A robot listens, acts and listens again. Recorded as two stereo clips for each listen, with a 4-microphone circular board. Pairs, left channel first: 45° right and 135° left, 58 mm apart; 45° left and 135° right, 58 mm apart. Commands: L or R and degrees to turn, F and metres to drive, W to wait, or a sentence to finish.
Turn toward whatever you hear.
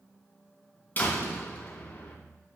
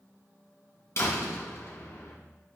L10
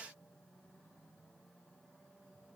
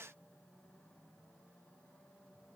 Facing where the door slam came from. I can't hear it now.